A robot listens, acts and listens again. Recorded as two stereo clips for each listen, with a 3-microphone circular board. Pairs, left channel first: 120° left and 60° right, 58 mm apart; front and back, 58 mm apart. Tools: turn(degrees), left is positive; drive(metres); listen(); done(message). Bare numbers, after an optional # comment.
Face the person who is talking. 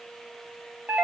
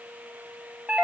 listen()
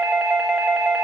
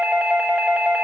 listen()
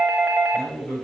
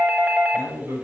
# The man speaking: 170° right.
turn(-170)
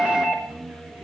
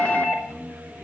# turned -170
done("Found it: a man speaking, straight ahead, over 4 m away.")